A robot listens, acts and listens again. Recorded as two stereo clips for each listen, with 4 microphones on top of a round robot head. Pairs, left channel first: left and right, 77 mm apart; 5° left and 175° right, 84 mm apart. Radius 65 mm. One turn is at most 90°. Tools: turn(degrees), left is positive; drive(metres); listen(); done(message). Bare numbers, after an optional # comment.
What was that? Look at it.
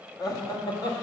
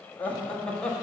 # The laughter: 85° left.
turn(85)
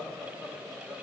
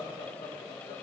done("Facing the laughter, 1 to 2 m away.")